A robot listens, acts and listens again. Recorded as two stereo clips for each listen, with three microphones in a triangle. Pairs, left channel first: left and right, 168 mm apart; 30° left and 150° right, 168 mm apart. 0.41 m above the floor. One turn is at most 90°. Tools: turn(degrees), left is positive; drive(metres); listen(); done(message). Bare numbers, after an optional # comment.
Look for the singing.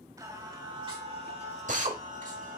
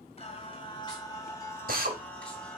# The singing: 55° right.
turn(-55)
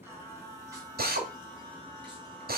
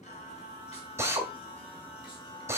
# The singing is now 30° right.
turn(-30)
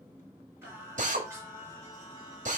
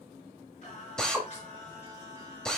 # The singing is now 20° right.
turn(-20)
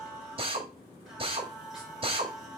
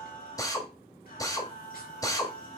done("Facing the singing.")